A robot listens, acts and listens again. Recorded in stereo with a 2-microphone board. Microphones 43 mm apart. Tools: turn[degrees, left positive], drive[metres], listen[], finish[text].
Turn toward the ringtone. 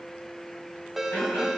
Action: turn[-30]
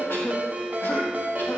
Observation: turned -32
Thought: So it is at 145° right.
Action: turn[-145]
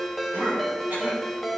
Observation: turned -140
Action: finish[Facing the ringtone, 1 to 2 m away.]